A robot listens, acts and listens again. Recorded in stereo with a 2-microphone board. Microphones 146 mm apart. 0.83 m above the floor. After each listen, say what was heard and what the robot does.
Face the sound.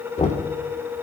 The knocking: about 50° left or 130° left. Turn 50° left.
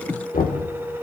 So it is at 80° left. Turn 80° left.
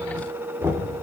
The knocking is now 15° right. Turn 15° right.
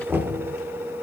Found it: knocking, straight ahead, 2 to 4 m away.